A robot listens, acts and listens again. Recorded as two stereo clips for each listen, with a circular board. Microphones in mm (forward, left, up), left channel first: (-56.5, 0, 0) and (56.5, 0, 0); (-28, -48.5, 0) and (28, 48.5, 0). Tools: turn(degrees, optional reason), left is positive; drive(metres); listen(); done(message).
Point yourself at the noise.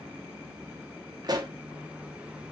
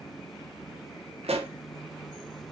turn(degrees=50, reason="The pop: 50° left.")
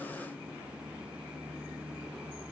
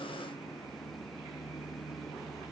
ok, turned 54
done("Facing where the pop came from. I can't hear it now.")